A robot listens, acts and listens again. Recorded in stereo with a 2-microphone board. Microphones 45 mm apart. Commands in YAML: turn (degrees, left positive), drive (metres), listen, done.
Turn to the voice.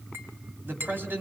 turn: -50
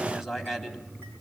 done: "Facing the man speaking."